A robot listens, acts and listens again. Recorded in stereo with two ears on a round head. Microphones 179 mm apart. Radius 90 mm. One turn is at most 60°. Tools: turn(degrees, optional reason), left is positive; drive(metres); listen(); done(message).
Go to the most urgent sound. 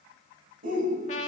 turn(degrees=-45, reason="The shout: about 45° right or 135° right.")
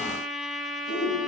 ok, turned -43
turn(degrees=-60, reason="So it is at 90° right.")
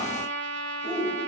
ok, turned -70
turn(degrees=-20, reason="The shout is now 20° right.")
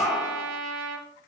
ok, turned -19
drive(metres=1.0)
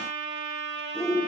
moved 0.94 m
drive(metres=1.0)
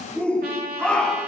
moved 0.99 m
drive(metres=1.0)
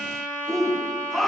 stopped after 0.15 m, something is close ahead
done("I am next to the shout.")